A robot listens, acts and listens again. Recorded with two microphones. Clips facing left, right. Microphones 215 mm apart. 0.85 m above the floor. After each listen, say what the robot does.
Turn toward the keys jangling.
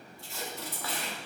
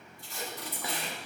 Turn 75° left.
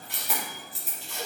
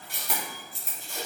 Facing the keys jangling.